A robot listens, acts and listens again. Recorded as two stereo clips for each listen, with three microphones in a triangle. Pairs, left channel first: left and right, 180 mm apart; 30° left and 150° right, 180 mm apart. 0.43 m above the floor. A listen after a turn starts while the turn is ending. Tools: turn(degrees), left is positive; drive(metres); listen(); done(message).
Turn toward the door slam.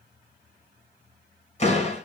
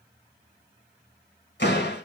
turn(degrees=40)
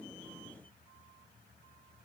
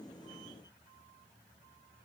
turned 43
done("I heard a door slam from this way, but can't make it out now.")